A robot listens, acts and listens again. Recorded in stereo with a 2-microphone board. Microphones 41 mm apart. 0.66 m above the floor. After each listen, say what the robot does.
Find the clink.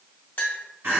Turn 60° left.
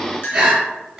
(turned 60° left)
Turn 60° left.
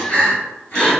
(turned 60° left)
Keep listening.
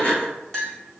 Turn 10° left.
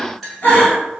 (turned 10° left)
Found it: a clink, straight ahead.